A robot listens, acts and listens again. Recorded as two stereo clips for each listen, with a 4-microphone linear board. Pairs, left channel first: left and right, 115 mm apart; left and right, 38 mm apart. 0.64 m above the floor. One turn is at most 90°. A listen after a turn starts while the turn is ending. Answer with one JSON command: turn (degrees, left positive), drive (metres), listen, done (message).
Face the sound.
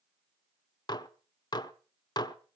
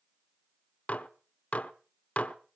{"turn": 35}
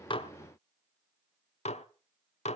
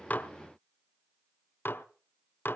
{"turn": 90}
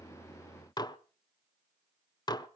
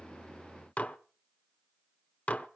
{"turn": 40}
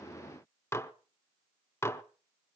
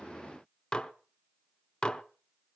{"turn": 25}
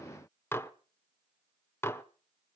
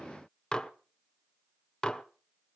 {"turn": 20}
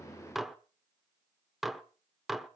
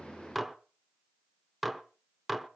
{"done": "Found it: dishes clattering, straight ahead."}